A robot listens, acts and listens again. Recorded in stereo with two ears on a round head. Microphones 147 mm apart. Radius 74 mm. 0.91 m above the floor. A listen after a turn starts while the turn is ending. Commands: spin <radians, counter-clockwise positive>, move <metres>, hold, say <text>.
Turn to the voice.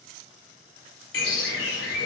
hold
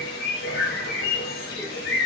hold
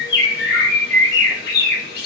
say I can't make out anyone speaking, only a bird.